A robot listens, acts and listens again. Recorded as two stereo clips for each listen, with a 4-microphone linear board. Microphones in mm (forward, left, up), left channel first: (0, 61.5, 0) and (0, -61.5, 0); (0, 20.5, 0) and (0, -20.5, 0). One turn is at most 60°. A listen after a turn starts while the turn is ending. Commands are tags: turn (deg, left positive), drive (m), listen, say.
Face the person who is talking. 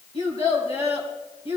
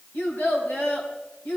<turn deg="55"/>
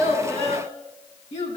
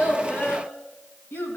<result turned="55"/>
<turn deg="60"/>
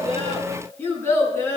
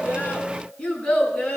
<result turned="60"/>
<turn deg="20"/>
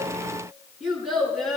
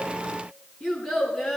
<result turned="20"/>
<say>Found it: a child speaking, straight ahead.</say>